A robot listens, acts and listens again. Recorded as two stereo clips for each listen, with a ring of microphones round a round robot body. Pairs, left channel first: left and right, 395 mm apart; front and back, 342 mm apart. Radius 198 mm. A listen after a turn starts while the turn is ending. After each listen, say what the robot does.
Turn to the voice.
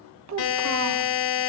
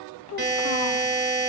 Turn 45° right.
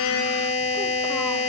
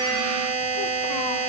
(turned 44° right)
Keep listening.
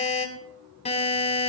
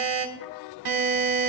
Keep listening.
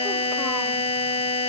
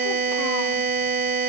Facing where the child speaking came from. I can't hear it now.